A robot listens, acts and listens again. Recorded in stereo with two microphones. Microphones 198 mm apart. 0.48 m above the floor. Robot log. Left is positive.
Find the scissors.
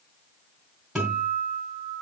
cmd idle
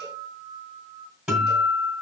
cmd idle
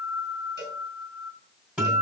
end: I can't make out scissors to turn to.